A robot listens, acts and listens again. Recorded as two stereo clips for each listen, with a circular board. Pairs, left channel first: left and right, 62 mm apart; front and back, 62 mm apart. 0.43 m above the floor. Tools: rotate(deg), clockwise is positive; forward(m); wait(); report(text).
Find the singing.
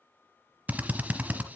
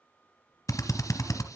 wait()
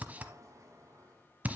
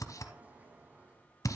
wait()
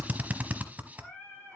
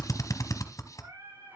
rotate(-160)
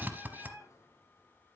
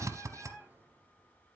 rotate(-30)
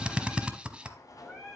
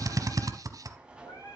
rotate(-10)
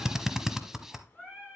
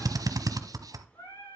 report("Found it: singing, straight ahead.")